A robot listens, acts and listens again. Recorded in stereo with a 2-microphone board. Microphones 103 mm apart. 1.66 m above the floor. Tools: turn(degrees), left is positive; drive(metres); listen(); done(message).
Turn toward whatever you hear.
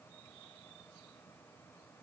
listen()
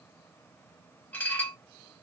turn(degrees=20)
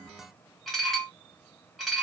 done("Facing the dishes clattering.")